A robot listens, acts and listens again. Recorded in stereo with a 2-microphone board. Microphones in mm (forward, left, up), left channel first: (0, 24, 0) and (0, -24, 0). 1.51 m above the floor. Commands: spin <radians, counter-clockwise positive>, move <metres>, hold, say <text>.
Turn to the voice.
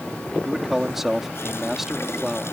spin -0.52
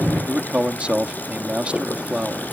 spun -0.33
spin -2.71
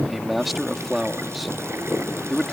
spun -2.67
say Facing the man speaking.